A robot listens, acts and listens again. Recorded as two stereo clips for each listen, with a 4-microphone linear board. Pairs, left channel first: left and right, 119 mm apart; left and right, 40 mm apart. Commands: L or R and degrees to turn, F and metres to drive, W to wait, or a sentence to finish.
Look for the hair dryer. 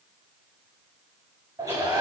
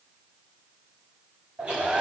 R35
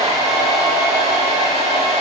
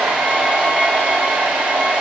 R115
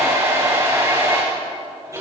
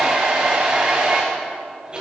R25
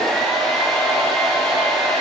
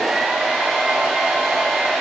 Facing the hair dryer.